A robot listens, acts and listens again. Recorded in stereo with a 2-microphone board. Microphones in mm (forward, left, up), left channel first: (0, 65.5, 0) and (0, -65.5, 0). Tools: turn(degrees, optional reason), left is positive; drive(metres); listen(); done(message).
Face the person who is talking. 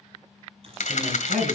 turn(degrees=-90)
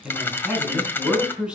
turn(degrees=-10, reason="So it is at 10° right.")
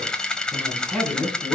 done("Facing the man speaking, over 4 m away.")